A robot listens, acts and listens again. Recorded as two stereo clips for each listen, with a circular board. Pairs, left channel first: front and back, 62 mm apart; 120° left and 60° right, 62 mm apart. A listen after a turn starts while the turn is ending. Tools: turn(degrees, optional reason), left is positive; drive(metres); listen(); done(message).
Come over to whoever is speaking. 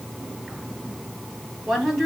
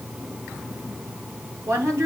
turn(degrees=-90, reason="The woman speaking: 90° right.")
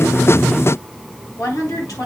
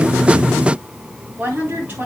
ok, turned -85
drive(metres=1.0)
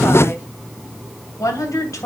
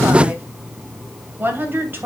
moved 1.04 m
turn(degrees=-10, reason="The woman speaking is now 10° right.")
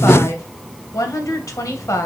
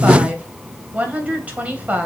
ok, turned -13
drive(metres=1.0)
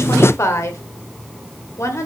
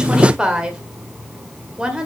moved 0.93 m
turn(degrees=15, reason="The woman speaking is now 15° left.")
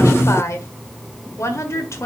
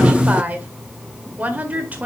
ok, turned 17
drive(metres=1.0)
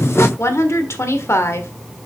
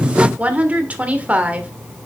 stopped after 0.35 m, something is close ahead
done("Arrived at the woman speaking, straight ahead.")